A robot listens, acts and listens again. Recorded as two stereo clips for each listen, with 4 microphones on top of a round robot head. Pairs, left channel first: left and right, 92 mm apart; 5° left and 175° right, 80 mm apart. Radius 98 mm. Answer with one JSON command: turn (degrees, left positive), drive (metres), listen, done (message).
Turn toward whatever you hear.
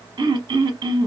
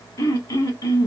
{"turn": -50}
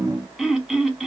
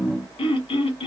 {"done": "Found it: throat clearing, straight ahead."}